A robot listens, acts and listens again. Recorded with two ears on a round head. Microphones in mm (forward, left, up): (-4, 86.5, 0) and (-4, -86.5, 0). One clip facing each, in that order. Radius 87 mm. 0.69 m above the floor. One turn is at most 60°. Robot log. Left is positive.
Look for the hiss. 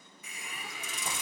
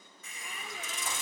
cmd yaw +30
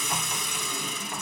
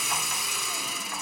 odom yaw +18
end: Facing the hiss.